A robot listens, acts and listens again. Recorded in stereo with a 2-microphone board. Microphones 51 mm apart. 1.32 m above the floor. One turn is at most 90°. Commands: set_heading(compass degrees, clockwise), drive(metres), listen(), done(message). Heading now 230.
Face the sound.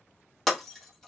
set_heading(200)
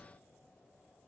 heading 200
listen()
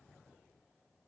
done("I heard breaking glass, but can't make it out now. It was about 25° right or 145° left.")